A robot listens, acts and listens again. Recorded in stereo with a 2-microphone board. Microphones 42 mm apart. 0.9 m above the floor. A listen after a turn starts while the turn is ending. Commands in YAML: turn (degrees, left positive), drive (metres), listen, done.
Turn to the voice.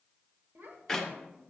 turn: -75
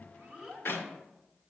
turn: -10
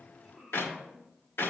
done: "Facing the child speaking."